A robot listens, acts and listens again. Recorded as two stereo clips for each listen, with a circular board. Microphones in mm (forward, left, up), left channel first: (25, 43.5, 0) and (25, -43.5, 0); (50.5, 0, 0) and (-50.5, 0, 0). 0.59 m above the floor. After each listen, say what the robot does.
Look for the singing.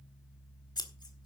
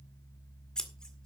Keep listening.
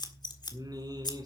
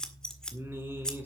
Turn 115° right.
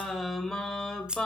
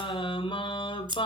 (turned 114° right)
Turn 10° left.
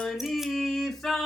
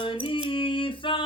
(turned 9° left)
Found it: singing, straight ahead, 2 to 4 m away.